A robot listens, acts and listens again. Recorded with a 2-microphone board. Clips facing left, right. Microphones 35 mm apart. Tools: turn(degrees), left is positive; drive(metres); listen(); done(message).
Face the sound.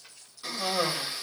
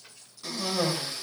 turn(degrees=15)
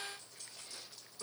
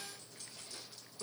done("Found it: a cough, straight ahead.")